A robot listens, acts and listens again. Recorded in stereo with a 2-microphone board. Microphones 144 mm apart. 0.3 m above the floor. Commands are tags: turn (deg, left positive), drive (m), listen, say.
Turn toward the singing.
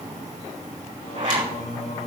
<turn deg="65"/>
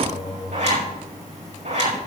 <turn deg="45"/>
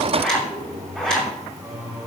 <turn deg="-25"/>
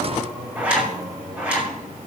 <turn deg="-10"/>
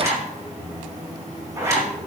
<say>Facing the singing, over 4 m away.</say>